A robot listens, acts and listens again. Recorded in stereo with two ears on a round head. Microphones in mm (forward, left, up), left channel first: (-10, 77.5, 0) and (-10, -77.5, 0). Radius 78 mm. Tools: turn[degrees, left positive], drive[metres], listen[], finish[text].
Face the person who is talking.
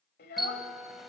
Thought: The child speaking: about 60° left or 120° left.
Action: turn[60]
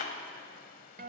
Action: listen[]
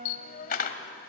Thought: So it is at 50° left.
Action: turn[50]
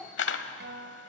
Thought: The child speaking is now 10° left.
Action: turn[10]
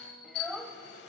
Action: finish[Found it: a child speaking, straight ahead, 1 to 2 m away.]